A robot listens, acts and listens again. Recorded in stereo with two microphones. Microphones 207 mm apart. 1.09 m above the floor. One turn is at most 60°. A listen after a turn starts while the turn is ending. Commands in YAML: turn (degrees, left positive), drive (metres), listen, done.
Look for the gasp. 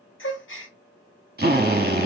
turn: 60
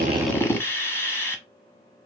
listen: true
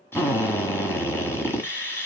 done: "I heard a gasp, but can't make it out now. It was about 5° left or 55° left."